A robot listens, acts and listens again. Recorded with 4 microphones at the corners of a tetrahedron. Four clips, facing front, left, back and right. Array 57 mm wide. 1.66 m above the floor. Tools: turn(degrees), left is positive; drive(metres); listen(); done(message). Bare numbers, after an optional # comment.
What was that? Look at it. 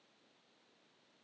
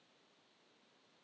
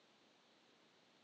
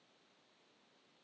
listen()
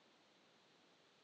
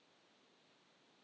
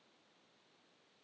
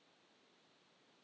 listen()
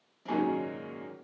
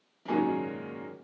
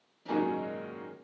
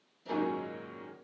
# The piano: 65° left.
turn(65)
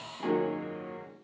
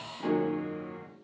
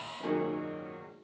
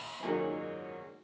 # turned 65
done("Facing the piano.")